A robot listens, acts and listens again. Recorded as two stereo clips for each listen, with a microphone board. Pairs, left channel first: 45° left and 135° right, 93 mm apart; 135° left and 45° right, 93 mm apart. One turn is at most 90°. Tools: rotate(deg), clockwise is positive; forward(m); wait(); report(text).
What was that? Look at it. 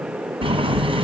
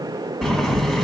rotate(90)
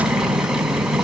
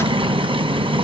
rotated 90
rotate(50)
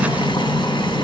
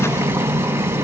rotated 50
rotate(-20)
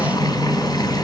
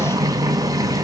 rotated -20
report("Facing the boiling.")